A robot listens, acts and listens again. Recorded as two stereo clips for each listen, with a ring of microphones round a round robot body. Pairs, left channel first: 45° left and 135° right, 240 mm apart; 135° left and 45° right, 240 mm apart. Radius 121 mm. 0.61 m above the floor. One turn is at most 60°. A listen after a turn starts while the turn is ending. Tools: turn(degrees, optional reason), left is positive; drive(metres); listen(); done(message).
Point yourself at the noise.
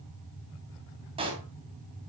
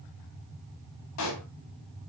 turn(degrees=60, reason="The pop: 155° left.")
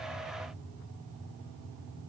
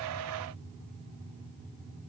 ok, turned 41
turn(degrees=60, reason="Nothing new. It was at 115° left.")
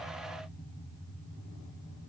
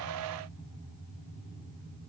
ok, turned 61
turn(degrees=55, reason="Nothing new. It was at 55° left.")
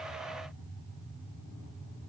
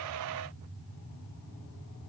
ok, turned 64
turn(degrees=-10, reason="Nothing new. It was at 10° right.")
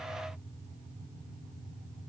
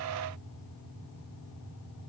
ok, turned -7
done("I heard a pop from this way, but can't make it out now.")